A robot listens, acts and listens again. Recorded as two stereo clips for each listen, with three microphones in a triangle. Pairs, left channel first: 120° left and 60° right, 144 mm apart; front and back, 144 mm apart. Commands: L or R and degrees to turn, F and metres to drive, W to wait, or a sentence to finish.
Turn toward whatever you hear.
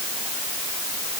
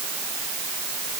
W
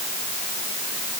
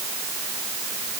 W
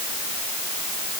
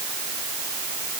I can't make out anything.